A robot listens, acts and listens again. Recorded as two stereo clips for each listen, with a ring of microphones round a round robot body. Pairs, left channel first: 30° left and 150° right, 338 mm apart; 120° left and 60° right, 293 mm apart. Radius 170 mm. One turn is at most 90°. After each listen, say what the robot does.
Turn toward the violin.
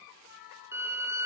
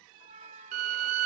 Turn 65° right.
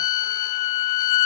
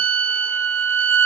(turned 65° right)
Turn 10° right.
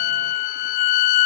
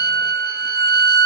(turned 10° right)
Found it: a violin, straight ahead, 1 to 2 m away.